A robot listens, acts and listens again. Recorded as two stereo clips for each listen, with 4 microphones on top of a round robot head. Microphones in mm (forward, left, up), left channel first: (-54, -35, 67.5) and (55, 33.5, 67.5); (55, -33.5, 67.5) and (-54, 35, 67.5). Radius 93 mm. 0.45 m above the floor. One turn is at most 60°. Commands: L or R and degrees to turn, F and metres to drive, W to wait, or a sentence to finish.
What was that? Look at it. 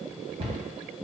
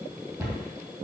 L60
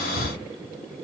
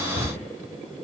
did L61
L15
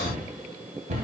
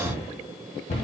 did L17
Found it: a cupboard door, straight ahead, 1 to 2 m away.